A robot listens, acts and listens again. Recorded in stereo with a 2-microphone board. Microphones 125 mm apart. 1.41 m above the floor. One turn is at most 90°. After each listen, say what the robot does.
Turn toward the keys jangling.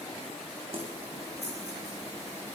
Turn 60° right.
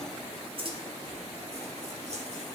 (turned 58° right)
Turn 60° right.
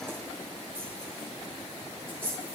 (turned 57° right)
Turn 20° right.
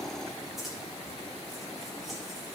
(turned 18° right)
Found it: keys jangling, straight ahead, 2 to 4 m away.